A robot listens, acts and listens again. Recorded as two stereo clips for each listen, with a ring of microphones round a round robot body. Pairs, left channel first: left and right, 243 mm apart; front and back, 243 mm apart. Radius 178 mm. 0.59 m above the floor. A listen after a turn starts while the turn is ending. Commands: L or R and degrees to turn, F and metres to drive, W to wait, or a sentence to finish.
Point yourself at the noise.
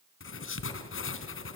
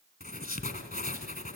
L55
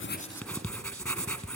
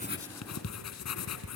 Found it: writing, straight ahead, 2 to 4 m away.